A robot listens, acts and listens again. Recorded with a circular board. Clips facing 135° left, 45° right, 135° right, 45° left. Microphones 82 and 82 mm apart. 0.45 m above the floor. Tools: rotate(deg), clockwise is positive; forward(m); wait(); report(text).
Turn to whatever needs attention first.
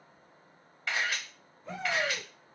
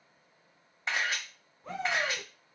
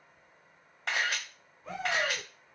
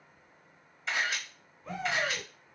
rotate(50)
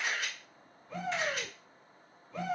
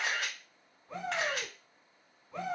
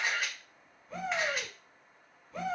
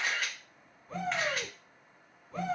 rotate(-10)
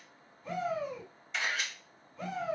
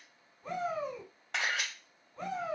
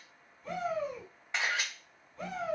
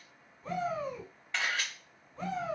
report("Facing the shout, 2 to 4 m away.")